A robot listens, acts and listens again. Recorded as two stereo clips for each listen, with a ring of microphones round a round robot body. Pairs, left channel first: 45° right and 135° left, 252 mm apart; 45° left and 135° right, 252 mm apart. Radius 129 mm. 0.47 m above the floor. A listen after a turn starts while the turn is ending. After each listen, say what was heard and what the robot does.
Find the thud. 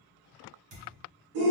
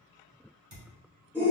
The thud: 170° right. Turn 170° right.
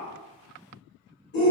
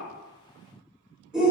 Facing where the thud came from. I can't hear it now.